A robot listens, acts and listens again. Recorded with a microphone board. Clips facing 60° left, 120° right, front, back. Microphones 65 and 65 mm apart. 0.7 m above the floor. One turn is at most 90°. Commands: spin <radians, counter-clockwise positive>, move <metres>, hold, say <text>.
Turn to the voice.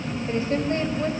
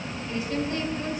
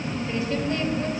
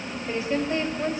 spin 1.57
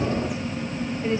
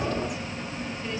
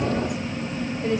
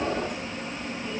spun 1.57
say Facing the woman speaking, over 4 m away.